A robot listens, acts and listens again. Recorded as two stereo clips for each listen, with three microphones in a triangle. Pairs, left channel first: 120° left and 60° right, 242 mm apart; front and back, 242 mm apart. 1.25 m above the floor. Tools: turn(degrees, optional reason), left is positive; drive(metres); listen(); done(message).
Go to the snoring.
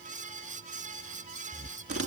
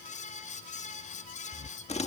turn(degrees=70, reason="The snoring: 70° left.")
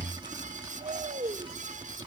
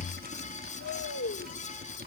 drive(metres=1.0)
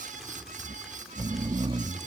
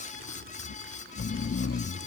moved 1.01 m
turn(degrees=10, reason="The snoring is now 10° left.")
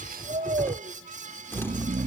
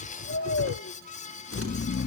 drive(metres=1.0)
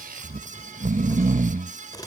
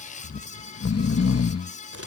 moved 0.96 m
drive(metres=1.0)
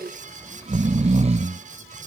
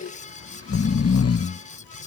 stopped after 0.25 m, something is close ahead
done("Arrived at the snoring, straight ahead.")